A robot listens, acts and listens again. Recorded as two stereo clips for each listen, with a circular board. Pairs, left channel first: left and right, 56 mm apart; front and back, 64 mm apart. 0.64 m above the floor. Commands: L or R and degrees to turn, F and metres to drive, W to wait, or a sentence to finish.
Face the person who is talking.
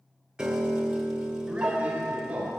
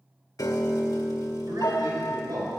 R165
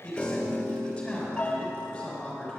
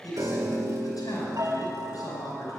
L10
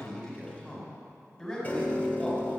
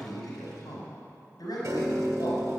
Facing the man speaking, over 4 m away.